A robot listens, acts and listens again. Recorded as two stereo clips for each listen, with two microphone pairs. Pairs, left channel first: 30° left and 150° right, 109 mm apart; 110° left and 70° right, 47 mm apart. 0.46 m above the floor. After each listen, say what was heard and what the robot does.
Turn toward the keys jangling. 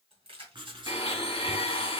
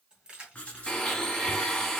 The keys jangling: 140° right. Turn 140° right.
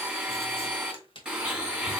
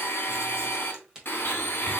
Found it: keys jangling, straight ahead, 1 to 2 m away.